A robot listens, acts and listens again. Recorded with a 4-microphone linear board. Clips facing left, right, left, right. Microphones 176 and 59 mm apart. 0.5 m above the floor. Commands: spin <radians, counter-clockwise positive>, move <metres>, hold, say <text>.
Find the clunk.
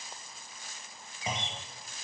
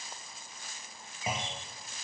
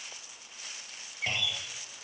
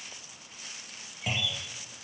spin -0.52
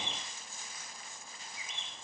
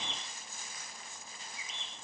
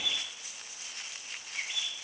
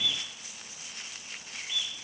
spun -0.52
hold
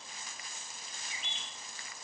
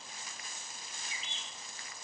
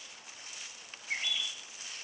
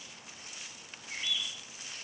say I heard a clunk, but can't make it out now. It was about 20° left or 140° right.